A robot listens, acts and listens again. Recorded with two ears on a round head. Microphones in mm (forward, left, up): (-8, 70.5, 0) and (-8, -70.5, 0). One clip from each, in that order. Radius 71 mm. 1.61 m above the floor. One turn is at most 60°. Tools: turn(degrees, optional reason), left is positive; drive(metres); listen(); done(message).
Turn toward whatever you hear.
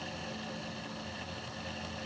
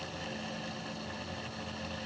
listen()
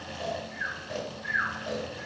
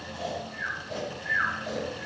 turn(degrees=50, reason="The snoring: about 50° left or 130° left.")
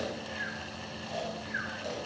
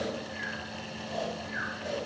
turn(degrees=60, reason="So it is at 80° left.")
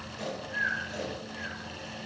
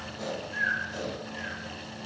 turn(degrees=20, reason="The snoring is now 20° left.")
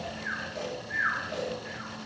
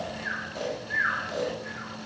done("Facing the snoring, under 1 m away.")